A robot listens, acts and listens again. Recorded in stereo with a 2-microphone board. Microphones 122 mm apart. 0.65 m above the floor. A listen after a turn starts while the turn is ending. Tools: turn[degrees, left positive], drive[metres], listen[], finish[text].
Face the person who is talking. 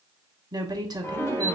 Thought: The woman speaking: about 35° right or 145° right.
Action: turn[-35]
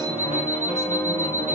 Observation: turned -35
Action: listen[]
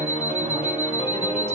Action: listen[]
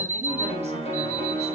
Action: finish[I heard a woman speaking, but can't make it out now. It was about straight ahead or 110° right.]